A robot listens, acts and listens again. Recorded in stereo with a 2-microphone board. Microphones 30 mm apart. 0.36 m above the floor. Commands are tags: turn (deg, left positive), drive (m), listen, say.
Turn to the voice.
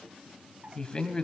<turn deg="30"/>
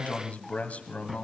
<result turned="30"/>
<turn deg="120"/>
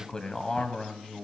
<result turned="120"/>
<turn deg="30"/>
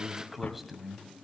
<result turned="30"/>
<say>Facing the man speaking, 2 to 4 m away.</say>